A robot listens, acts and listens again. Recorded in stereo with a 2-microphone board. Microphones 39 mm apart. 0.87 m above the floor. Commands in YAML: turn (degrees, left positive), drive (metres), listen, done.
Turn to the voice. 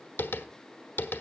listen: true
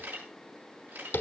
listen: true
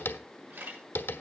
done: "I can't make out anyone speaking, only tapping and a camera shutter."